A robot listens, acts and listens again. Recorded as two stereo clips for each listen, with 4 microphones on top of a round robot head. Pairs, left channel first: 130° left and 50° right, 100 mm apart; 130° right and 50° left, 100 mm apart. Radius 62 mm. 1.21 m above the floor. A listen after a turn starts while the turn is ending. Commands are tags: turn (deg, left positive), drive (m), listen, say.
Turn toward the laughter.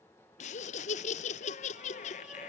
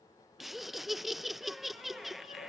<turn deg="140"/>
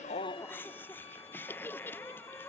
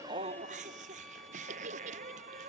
<turn deg="55"/>
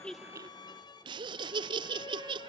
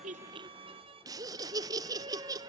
<say>Found it: laughter, straight ahead.</say>